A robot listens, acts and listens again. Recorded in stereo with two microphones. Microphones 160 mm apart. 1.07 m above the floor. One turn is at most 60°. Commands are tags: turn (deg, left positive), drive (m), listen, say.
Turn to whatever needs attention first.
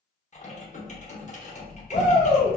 <turn deg="50"/>
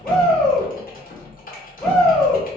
<say>Found it: a shout, straight ahead, 1 to 2 m away.</say>